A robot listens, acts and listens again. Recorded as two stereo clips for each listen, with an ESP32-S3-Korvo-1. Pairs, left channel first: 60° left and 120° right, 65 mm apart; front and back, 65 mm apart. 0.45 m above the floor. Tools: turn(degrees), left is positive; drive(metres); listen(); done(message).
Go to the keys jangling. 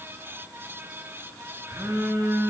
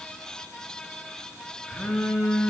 listen()
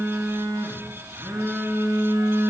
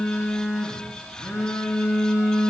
listen()
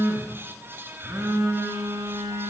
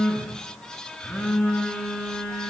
done("I can't make out keys jangling, only a phone buzzing.")